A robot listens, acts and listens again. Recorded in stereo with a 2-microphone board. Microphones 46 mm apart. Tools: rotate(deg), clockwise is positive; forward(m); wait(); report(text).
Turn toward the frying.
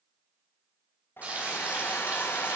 rotate(30)
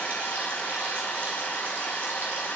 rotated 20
wait()
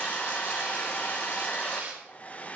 rotate(130)
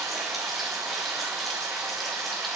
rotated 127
report("Facing the frying.")